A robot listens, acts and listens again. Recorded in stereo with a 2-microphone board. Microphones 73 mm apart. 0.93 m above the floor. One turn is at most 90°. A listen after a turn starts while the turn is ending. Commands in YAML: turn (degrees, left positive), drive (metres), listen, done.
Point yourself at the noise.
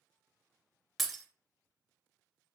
turn: 30
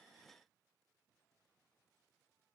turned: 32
listen: true
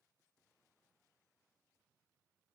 done: "I heard breaking glass, but can't make it out now. It was about 35° right or 150° left."